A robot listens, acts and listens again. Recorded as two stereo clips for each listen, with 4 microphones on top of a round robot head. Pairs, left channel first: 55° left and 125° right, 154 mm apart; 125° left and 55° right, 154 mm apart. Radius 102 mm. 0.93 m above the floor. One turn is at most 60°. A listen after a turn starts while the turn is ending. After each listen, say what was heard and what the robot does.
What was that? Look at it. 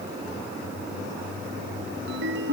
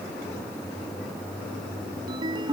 The ringtone: 120° right. Turn 60° right.
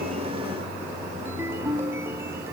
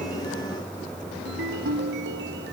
The ringtone is now 50° right. Turn 50° right.
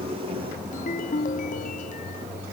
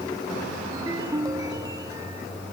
The ringtone is now 15° left. Turn 15° left.
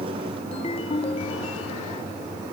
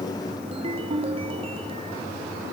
Found it: a ringtone, straight ahead.